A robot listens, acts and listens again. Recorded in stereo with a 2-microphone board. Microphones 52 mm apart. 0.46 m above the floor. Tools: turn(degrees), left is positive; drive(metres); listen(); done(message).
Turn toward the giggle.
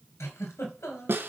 turn(degrees=65)
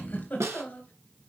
turn(degrees=35)
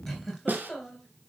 done("Found it: a giggle, straight ahead, 2 to 4 m away.")